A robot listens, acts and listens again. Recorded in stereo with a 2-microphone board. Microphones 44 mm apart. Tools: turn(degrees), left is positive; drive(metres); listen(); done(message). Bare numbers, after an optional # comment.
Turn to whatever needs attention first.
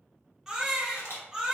turn(-30)
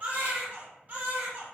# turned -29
# So it is at 140° right.
turn(-140)
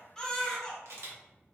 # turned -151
# The baby crying is now 10° left.
turn(10)
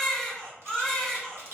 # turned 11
done("Facing the baby crying, 1 to 2 m away.")